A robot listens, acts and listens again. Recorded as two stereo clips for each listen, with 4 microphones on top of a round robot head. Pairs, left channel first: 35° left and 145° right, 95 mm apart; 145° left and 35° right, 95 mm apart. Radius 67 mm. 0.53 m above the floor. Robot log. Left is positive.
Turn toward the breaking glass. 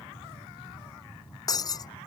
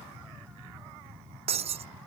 note: The breaking glass: 15° right.
cmd yaw -15
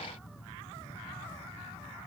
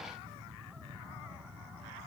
end: Facing where the breaking glass came from. I can't hear it now.